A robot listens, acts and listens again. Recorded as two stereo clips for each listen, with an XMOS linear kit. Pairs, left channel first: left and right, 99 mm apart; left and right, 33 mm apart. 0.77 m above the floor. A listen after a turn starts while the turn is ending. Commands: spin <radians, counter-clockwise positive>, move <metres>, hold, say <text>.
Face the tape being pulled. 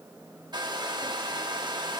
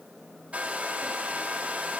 hold
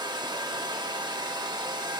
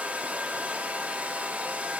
hold
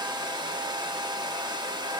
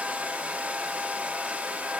say I can't make out tape being pulled, only a hair dryer.